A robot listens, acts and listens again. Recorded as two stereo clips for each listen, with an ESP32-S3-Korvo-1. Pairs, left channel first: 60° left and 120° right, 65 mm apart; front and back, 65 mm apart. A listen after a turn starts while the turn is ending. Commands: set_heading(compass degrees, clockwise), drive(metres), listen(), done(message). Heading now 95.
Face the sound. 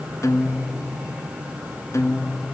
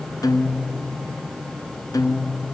set_heading(75)
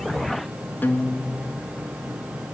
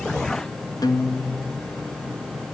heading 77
done("Facing the guitar, 1 to 2 m away.")